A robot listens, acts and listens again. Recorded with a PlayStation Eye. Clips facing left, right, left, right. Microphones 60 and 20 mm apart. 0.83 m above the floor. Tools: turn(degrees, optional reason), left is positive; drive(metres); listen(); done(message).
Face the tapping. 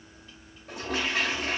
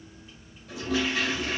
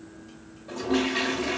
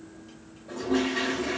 listen()
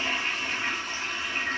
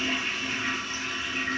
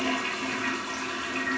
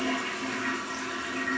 listen()
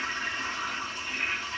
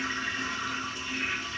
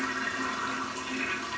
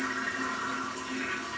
done("I can't make out tapping, only a toilet flushing.")